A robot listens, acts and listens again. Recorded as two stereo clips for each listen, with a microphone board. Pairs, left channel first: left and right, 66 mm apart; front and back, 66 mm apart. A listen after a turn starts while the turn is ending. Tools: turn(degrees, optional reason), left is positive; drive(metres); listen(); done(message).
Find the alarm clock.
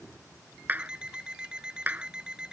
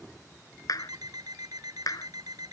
turn(degrees=-170, reason="The alarm clock: 170° right.")
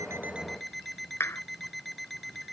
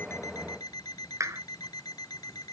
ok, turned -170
done("Found it: an alarm clock, straight ahead.")